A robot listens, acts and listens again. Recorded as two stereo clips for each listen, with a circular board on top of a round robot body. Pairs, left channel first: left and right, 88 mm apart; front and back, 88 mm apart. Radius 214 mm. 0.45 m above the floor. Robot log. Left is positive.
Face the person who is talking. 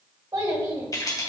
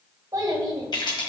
note: The child speaking: 135° right.
cmd yaw -135
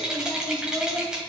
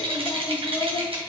cmd idle
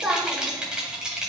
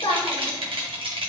end: Facing the child speaking, 1 to 2 m away.